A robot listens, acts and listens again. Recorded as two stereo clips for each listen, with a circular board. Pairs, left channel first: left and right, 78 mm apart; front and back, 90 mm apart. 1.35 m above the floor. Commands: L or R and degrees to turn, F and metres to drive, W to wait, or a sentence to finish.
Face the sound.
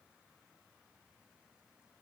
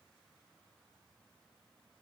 W
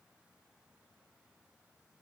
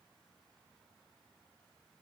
W
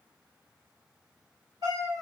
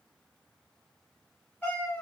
R70
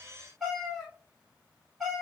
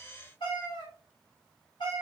Found it: a cat meowing, straight ahead.